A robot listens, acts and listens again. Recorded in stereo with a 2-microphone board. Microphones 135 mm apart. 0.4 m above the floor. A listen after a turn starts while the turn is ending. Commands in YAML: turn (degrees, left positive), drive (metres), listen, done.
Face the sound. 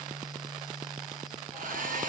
turn: -90
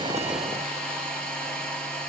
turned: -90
done: "Facing the hair dryer."